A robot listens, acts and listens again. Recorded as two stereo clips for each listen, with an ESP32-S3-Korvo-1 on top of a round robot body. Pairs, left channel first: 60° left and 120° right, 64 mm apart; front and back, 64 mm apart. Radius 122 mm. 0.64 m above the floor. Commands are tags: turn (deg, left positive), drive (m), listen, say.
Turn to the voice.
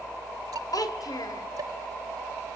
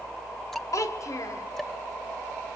<turn deg="40"/>
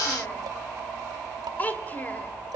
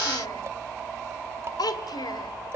<say>Facing the child speaking, 2 to 4 m away.</say>